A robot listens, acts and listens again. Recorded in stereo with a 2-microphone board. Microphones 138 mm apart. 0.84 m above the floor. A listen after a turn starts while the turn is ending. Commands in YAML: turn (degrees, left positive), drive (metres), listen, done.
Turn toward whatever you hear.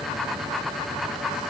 listen: true
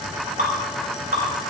turn: -90
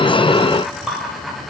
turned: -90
done: "Facing the dripping."